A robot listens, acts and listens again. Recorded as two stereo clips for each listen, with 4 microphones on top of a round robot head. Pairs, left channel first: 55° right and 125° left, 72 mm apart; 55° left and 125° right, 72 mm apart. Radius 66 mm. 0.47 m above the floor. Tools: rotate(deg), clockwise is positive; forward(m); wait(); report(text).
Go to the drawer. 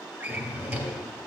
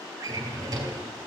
rotate(170)
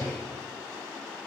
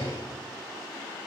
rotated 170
rotate(-15)
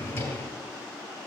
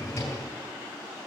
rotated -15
forward(1.0)
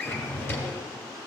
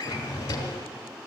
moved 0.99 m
forward(1.0)
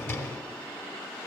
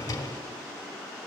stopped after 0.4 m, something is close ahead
report("Arrived at the drawer, straight ahead.")